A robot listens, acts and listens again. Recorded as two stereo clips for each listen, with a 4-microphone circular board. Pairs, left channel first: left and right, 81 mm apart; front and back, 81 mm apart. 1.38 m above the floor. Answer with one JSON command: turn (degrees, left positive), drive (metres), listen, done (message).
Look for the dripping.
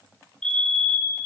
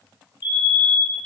{"listen": true}
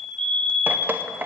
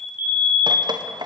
{"turn": -160}
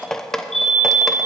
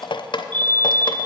{"done": "Facing the dripping, under 1 m away."}